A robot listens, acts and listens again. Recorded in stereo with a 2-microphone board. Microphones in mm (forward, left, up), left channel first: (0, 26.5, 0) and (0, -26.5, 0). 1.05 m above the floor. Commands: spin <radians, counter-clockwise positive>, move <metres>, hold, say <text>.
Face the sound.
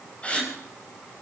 spin 0.44
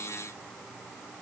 hold
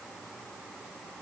say I heard a gasp, but can't make it out now. It was about straight ahead or 130° left.